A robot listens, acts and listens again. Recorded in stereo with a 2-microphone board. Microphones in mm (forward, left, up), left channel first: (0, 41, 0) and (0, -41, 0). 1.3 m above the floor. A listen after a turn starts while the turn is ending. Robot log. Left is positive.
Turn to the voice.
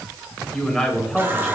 cmd yaw +30
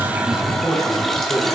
note: So it is at 145° left.
cmd yaw +145
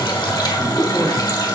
cmd idle
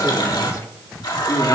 note: The man speaking is now 50° left.
cmd yaw +50
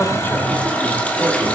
cmd idle
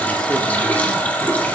cmd idle
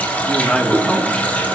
note: The man speaking is now 10° left.
cmd yaw +10
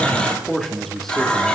end: Facing the man speaking, 1 to 2 m away.